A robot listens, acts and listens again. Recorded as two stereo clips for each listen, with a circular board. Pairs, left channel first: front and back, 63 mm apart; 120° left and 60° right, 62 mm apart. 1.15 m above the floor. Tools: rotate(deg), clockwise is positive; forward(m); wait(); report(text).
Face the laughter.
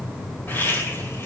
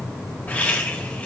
rotate(-55)
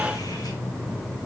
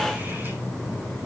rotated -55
wait()
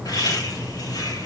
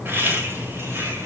report("Facing the laughter, over 4 m away.")